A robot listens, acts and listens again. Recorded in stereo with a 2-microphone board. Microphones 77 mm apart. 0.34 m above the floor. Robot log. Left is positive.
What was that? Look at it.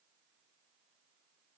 cmd idle
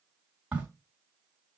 cmd yaw -30
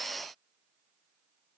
cmd idle
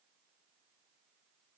end: I heard a crack, but can't make it out now. It was about 15° left or 135° right.